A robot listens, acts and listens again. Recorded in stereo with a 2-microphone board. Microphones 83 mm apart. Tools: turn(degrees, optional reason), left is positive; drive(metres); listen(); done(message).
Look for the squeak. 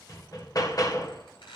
turn(degrees=90)
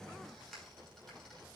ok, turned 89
done("Facing the squeak.")